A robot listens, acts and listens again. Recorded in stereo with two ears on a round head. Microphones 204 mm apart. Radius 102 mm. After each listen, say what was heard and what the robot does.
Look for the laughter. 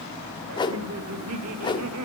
The laughter: about 75° right or 105° right. Turn 75° right.
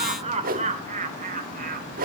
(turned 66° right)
So it is at 40° right. Turn 40° right.
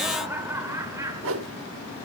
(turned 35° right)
The laughter is now 15° right. Turn 15° right.
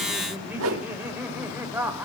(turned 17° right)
The laughter is now 10° right. Turn 10° right.
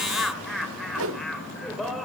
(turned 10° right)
Facing the laughter.